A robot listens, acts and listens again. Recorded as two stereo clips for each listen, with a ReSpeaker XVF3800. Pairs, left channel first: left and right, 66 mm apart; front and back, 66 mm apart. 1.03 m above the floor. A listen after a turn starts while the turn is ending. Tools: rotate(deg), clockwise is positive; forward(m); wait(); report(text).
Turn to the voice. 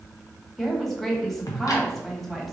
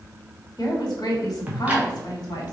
report("Facing the woman speaking.")